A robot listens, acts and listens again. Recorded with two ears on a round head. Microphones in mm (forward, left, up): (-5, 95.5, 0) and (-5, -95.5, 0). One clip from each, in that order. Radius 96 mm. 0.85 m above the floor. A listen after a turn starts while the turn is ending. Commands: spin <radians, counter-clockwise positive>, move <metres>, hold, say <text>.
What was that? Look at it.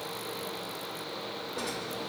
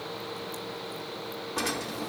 spin -0.96
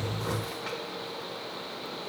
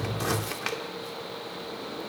hold
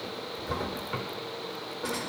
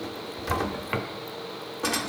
spin -1.22
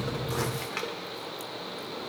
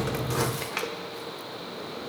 say Found it: a drawer, straight ahead, 1 to 2 m away.